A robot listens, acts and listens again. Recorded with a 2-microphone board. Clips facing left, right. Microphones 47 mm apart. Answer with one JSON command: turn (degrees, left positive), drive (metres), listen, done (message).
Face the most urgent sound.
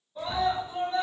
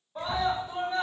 {"turn": -90}
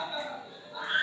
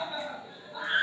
{"done": "Found it: a scream, straight ahead."}